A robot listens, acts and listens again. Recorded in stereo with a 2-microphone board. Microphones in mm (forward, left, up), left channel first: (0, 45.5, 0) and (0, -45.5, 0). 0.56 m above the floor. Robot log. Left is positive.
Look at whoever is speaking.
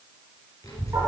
note: The child speaking: about 40° left or 140° left.
cmd yaw +40
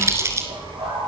note: So it is at 110° left.
cmd yaw +110
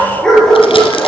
cmd idle
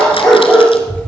note: The child speaking is now 15° left.
cmd yaw +15
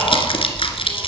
end: Facing the child speaking.